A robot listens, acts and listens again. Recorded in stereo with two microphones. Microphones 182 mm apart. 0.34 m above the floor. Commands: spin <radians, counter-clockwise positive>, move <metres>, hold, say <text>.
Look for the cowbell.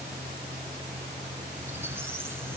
hold
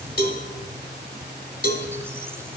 spin 0.96
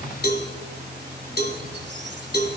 spin 1.13
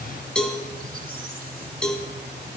say Found it: a cowbell, straight ahead.